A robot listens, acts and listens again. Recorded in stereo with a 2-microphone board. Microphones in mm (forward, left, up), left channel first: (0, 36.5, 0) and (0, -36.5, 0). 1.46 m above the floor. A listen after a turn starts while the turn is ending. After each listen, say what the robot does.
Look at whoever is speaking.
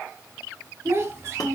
Turn 40° right.
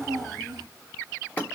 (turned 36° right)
Turn 100° right.
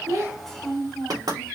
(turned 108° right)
Found it: a child speaking, straight ahead, 2 to 4 m away.